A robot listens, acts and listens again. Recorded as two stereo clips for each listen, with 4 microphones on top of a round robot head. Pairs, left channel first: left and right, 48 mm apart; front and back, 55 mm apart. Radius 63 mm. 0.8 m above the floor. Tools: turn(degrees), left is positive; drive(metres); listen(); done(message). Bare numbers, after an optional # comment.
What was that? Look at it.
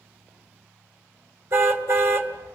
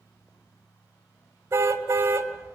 # The car horn: 125° right.
turn(-125)
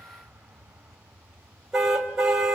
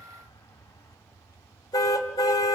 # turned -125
# The car horn is now 10° right.
turn(-10)
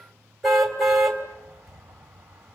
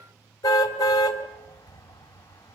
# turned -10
done("Facing the car horn, 2 to 4 m away.")